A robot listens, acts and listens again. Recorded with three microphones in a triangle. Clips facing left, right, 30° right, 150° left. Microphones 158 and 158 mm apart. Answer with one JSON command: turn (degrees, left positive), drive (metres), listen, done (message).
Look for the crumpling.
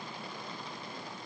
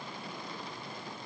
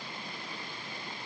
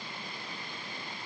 {"listen": true}
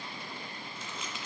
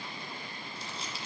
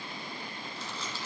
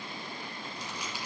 {"turn": -135}
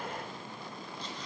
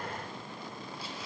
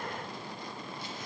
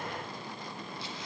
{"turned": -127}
{"turn": -10}
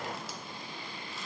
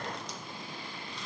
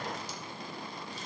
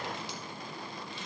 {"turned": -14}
{"listen": true}
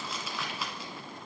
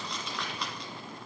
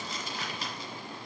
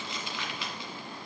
{"done": "Facing the crumpling, 1 to 2 m away."}